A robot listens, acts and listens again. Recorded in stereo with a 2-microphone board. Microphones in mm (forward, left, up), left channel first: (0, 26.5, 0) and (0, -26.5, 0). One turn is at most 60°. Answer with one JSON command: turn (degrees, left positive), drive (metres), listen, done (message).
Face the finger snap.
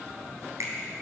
{"turn": -60}
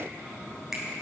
{"done": "Facing the finger snap."}